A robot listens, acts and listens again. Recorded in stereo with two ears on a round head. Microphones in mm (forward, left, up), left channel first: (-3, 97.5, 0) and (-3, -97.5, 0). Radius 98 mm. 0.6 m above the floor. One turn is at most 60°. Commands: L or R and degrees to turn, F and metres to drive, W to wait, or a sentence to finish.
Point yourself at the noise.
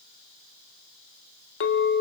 L60
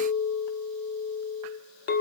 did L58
L55
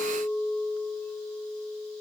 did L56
Facing the clink.